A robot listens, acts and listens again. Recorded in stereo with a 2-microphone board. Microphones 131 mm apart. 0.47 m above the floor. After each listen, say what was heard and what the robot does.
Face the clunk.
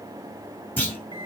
Turn 30° left.
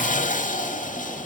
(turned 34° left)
Keep listening.
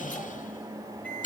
I heard a clunk, but can't make it out now. It was about 20° right or 135° left.